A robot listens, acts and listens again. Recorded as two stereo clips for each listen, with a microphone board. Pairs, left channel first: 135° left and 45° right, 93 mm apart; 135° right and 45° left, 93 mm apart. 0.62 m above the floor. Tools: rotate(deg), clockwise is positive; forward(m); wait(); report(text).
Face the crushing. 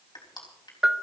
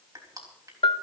rotate(-95)
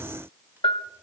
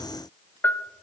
wait()
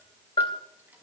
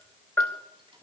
rotate(-20)
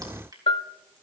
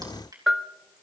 report("Found it: crushing, straight ahead, over 4 m away.")